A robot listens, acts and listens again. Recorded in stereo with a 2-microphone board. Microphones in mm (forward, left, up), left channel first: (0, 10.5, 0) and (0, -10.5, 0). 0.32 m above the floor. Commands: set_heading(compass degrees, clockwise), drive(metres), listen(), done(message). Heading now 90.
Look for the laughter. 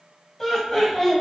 set_heading(60)
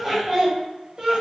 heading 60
set_heading(95)
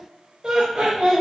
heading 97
set_heading(142)
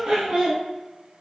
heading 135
set_heading(170)
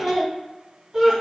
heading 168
set_heading(183)
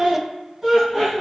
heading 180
done("Found it: laughter, straight ahead, 1 to 2 m away.")